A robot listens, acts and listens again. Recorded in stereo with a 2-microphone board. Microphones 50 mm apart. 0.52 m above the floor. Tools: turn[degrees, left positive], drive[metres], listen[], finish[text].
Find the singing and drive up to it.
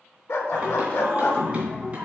Thought: The singing: about 25° right or 155° right.
Action: turn[-25]
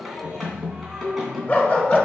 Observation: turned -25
Action: drive[1.0]
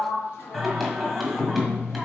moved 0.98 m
Action: drive[1.0]
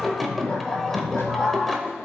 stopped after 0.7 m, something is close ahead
Action: finish[Arrived at the singing, straight ahead.]